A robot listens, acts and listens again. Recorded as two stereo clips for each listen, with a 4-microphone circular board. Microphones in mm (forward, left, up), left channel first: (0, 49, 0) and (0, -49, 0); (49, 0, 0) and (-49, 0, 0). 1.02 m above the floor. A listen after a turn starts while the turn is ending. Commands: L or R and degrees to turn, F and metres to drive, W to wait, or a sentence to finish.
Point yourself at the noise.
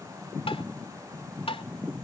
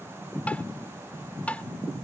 L75
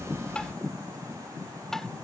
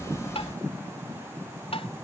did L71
Facing the tapping.